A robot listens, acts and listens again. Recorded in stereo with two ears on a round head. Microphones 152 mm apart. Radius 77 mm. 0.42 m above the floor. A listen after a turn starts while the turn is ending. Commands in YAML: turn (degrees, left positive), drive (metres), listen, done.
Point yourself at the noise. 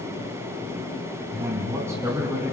turn: -15
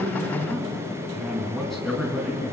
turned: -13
turn: 30
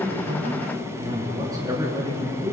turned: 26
turn: -20
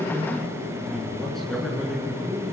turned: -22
done: "Found it: a man speaking, straight ahead, over 4 m away."